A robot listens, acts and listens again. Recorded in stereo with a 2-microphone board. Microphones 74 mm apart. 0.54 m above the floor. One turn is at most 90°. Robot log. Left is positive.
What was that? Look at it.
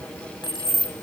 note: The keys jangling: about 75° left or 105° left.
cmd yaw +75
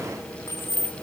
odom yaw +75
note: So it is at 35° left.
cmd yaw +35
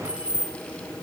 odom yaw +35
note: The keys jangling is now 15° right.
cmd yaw -15
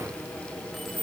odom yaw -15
end: Found it: keys jangling, straight ahead, over 4 m away.